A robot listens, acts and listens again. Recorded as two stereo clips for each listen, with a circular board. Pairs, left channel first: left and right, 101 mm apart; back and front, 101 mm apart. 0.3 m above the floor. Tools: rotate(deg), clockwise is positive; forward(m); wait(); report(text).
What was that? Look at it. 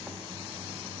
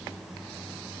wait()
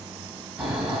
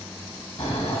rotate(170)
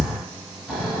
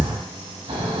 report("Facing the snoring.")